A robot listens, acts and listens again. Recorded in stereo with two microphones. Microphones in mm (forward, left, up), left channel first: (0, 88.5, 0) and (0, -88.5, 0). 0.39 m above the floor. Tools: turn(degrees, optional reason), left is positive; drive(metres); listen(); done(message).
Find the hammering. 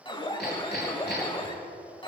turn(degrees=90)
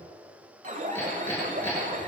turn(degrees=15, reason="So it is at 15° left.")
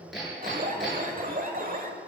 done("Found it: hammering, straight ahead.")